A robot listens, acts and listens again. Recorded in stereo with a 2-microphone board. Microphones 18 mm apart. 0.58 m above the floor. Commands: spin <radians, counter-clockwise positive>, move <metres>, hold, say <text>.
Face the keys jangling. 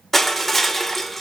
hold
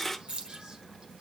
spin -1.05
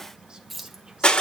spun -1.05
say Facing the keys jangling.